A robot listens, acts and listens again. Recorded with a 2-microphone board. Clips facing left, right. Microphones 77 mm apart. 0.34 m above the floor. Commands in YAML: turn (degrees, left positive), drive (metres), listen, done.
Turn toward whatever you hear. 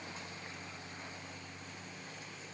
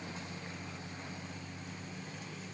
listen: true
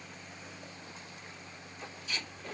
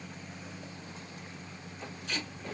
turn: -65
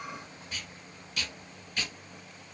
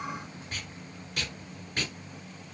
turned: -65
turn: -45
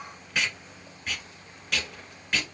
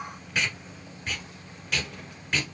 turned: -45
done: "Facing the tape being pulled."